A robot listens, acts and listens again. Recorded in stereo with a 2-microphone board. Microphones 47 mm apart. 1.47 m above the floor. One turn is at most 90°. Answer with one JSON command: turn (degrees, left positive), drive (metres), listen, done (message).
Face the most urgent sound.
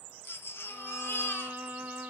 {"turn": 55}
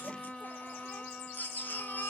{"turn": 50}
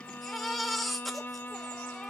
{"done": "Found it: a baby crying, straight ahead."}